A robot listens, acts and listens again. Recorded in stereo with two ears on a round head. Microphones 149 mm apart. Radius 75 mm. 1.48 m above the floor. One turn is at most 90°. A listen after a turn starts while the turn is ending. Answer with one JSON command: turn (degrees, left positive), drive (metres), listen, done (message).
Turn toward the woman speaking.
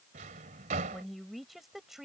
{"turn": 30}
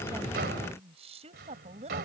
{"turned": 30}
{"turn": -40}
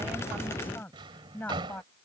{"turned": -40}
{"turn": 10}
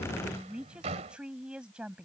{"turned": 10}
{"done": "Facing the woman speaking."}